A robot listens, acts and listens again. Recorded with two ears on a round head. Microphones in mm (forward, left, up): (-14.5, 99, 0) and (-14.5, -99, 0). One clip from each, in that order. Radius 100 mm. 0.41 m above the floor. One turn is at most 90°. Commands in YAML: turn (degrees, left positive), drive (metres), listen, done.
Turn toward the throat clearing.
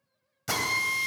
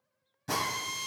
listen: true
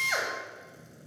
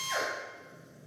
listen: true
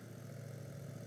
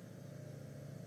done: "I can't make out throat clearing to turn to."